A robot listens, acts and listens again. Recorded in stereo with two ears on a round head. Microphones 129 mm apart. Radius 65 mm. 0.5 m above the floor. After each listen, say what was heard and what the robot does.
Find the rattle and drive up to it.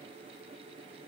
Keep listening.
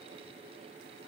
Keep listening.
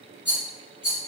The rattle: about 20° left or 160° left. Turn 20° left.
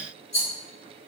So it is at 140° left. Turn 140° left.
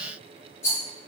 The rattle is now 20° left. Turn 20° left.
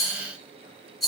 Drive 1.0 m forward.
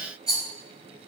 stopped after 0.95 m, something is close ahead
I am next to the rattle.